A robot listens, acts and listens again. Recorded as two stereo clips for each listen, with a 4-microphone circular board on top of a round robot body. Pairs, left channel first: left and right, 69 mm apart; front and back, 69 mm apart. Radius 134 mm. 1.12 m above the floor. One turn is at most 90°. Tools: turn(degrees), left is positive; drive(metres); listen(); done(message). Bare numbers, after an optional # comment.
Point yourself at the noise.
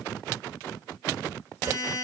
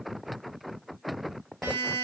# The buzzer: 130° right.
turn(-90)
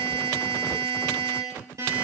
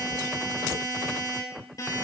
# The buzzer is now 45° right.
turn(-45)
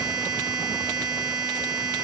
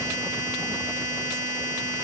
# The buzzer is now 20° right.
turn(-20)
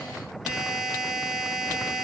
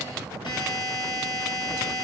done("Facing the buzzer, over 4 m away.")